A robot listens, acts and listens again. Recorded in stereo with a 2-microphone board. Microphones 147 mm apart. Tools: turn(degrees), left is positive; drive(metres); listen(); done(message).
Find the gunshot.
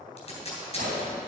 turn(degrees=-90)
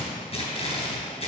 done("Facing where the gunshot came from. I can't hear it now.")